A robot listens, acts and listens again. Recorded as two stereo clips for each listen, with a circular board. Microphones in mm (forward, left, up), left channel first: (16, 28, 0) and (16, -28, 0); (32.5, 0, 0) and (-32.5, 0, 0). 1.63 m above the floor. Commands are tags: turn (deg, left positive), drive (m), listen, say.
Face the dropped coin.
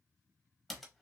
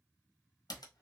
<listen/>
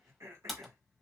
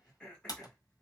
<listen/>
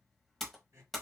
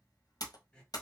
<say>I can't make out a dropped coin to turn to.</say>